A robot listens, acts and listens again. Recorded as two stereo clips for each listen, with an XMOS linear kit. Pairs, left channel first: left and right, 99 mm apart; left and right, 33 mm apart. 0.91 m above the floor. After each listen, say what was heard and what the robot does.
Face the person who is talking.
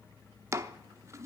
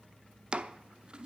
Keep listening.
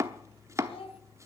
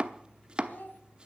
The child speaking: about 75° left or 105° left. Turn 75° left.
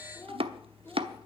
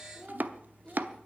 So it is at 20° left. Turn 20° left.
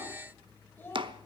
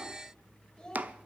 The child speaking is now 20° left. Turn 20° left.
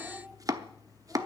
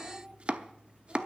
Keep listening.
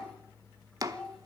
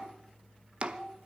The child speaking is now 10° left. Turn 10° left.
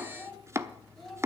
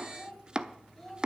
Found it: a child speaking, straight ahead, 2 to 4 m away.